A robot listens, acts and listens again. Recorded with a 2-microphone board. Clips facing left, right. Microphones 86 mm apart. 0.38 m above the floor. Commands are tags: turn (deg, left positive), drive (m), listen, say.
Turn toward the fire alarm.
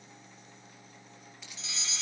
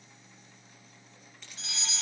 <turn deg="-50"/>
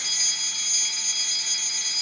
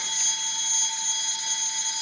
<turn deg="-65"/>
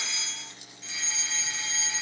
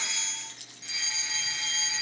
<turn deg="-15"/>
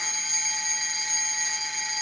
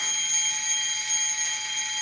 <say>Found it: a fire alarm, straight ahead, over 4 m away.</say>